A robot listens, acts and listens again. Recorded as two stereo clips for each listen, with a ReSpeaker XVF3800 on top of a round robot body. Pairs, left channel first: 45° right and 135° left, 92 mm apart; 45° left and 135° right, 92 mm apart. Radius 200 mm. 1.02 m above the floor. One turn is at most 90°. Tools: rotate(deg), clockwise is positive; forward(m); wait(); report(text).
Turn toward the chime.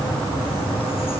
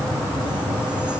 wait()
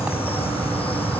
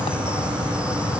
wait()
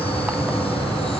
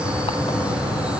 report("I can't make out a chime.")